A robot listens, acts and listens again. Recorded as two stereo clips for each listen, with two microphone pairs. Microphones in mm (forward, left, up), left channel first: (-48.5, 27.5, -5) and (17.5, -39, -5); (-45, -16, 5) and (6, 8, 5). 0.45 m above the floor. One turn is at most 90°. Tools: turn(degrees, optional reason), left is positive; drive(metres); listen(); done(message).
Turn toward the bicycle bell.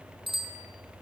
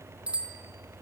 turn(degrees=-40, reason="The bicycle bell: 40° right.")
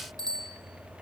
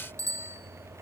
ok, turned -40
done("Found it: a bicycle bell, straight ahead.")